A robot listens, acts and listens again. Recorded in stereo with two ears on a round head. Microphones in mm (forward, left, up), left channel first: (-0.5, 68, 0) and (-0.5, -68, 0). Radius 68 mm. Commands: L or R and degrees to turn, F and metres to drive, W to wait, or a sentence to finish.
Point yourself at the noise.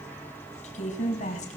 L50
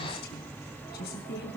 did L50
L70
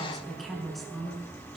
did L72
Facing the woman speaking, over 4 m away.